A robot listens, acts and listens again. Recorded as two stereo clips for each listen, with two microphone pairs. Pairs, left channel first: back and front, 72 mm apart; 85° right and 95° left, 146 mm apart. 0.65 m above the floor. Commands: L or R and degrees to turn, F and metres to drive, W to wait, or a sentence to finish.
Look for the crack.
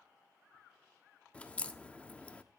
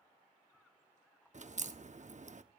L110
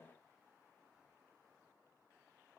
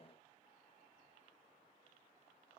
Facing where the crack came from. I can't hear it now.